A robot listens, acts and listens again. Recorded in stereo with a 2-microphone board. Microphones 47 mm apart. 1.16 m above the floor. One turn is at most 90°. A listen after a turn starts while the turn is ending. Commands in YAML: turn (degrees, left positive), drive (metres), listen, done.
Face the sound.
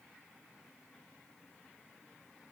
listen: true
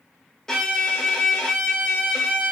turn: 30
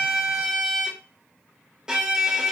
turn: -15
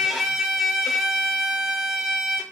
done: "Found it: a violin, straight ahead, 1 to 2 m away."